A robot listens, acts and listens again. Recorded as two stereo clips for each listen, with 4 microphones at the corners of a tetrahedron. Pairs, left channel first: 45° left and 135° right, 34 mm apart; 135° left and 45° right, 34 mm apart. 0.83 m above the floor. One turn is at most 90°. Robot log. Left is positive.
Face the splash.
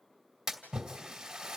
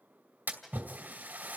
note: The splash: 60° right.
cmd yaw -60
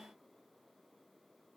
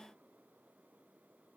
end: I heard a splash from this way, but can't make it out now.